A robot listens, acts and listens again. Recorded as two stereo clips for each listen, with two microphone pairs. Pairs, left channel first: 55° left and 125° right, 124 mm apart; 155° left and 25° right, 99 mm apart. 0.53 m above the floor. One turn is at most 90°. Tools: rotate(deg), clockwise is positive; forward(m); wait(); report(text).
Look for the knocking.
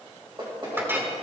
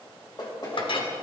rotate(90)
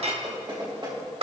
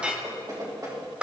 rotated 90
rotate(75)
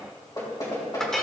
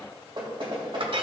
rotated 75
report("Facing the knocking, 2 to 4 m away.")